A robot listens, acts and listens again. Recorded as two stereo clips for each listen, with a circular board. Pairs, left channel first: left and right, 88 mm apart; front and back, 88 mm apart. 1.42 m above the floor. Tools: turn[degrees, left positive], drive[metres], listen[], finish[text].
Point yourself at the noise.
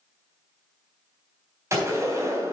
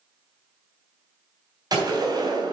Thought: The gunshot: 145° right.
Action: turn[-145]
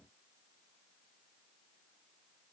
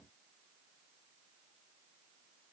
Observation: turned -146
Action: finish[I heard a gunshot from this way, but can't make it out now.]